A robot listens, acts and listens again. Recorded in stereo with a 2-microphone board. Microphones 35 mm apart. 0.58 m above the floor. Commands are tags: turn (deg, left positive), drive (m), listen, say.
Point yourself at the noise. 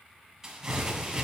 <turn deg="-30"/>
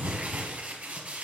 <turn deg="-135"/>
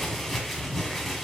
<say>Found it: crumpling, straight ahead.</say>